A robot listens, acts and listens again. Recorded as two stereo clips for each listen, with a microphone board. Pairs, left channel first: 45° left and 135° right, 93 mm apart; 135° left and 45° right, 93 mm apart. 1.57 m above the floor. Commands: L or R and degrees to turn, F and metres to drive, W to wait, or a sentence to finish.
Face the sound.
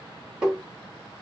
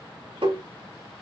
R50
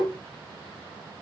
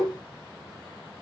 Facing the tapping, 2 to 4 m away.